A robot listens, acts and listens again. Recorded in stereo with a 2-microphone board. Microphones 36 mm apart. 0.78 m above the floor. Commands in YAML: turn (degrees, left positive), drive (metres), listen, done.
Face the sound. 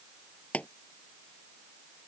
turn: 40
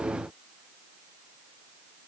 listen: true
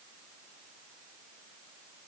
done: "I heard a pop, but can't make it out now. It was about straight ahead or 100° left."